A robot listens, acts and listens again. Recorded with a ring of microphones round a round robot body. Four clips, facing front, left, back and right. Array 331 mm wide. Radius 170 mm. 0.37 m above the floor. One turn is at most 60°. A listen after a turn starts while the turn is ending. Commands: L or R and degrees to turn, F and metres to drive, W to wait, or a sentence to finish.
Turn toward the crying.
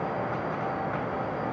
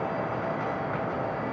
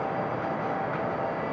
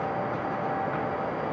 W
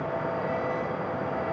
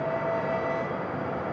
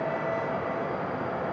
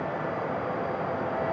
W
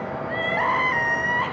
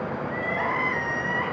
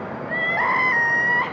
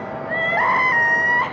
R60
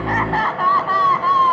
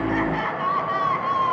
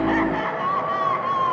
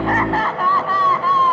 R45
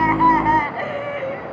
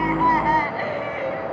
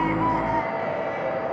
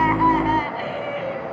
L10
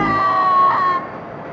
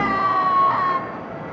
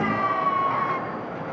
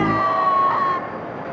Found it: crying, straight ahead, 2 to 4 m away.